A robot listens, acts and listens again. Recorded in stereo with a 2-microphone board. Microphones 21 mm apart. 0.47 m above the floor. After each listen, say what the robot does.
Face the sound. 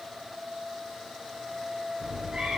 Turn 40° right.
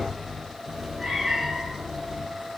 Turn 15° right.
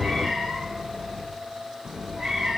Turn 10° right.
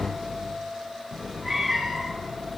Facing the cat meowing, 2 to 4 m away.